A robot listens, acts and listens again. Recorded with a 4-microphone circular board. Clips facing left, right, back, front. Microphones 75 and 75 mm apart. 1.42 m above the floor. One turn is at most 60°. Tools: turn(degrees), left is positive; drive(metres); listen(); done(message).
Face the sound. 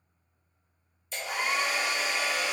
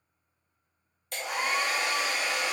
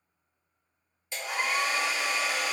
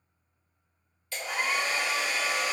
turn(degrees=-60)
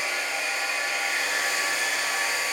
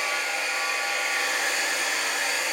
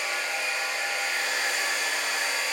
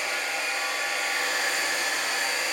turn(degrees=-55)
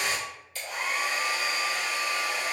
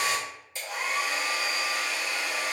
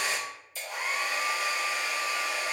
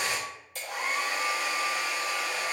turn(degrees=-25)
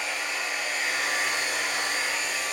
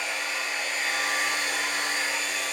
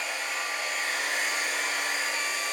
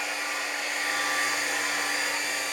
done("Facing the hair dryer.")